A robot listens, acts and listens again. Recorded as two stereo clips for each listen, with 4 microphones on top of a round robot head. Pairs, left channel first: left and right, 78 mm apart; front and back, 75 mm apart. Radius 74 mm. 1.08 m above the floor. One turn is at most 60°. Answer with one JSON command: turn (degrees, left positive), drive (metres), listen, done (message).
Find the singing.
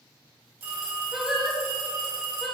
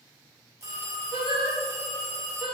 {"turn": 60}
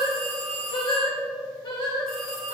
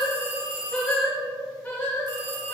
{"turn": 60}
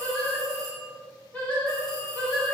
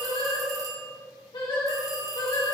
{"turn": 20}
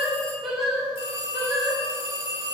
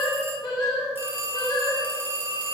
{"done": "Facing the singing, 2 to 4 m away."}